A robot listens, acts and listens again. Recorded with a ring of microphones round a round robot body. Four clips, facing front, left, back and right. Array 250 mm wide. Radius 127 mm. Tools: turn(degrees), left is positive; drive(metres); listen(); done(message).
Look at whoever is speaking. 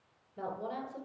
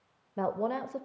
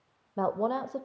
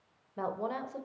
turn(degrees=155)
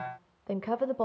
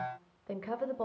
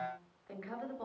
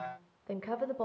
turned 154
done("Facing the woman speaking, 1 to 2 m away.")